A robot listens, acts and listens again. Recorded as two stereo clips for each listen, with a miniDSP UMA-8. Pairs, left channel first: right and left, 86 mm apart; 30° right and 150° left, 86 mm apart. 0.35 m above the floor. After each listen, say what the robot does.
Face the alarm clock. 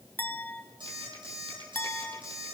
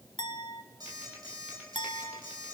Turn 110° left.
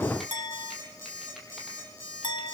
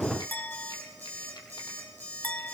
Turn 40° left.
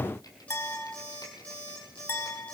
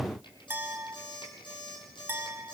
Turn 15° right.
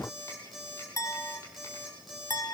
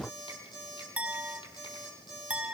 Facing the alarm clock, over 4 m away.